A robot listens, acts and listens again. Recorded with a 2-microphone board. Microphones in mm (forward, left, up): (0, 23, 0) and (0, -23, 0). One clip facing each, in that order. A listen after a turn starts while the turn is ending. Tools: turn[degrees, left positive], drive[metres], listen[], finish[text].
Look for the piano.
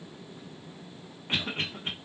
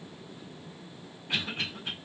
Action: listen[]
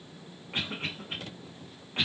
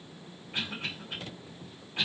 Action: listen[]
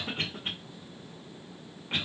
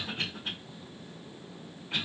Action: finish[I can't make out a piano, only a cough.]